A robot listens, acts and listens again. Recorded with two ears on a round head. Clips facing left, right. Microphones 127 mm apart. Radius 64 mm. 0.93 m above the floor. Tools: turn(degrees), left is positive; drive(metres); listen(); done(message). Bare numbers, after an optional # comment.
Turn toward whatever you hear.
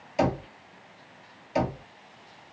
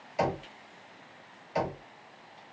# The knocking: about 30° left or 150° left.
turn(30)
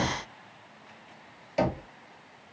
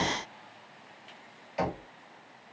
# So it is at 120° left.
turn(120)
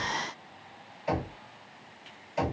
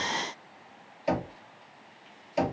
# The knocking is now 35° right.
turn(-35)
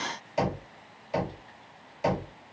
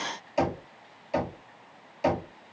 # The knocking is now 10° right.
turn(-10)
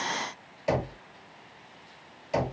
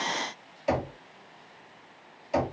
done("Facing the knocking.")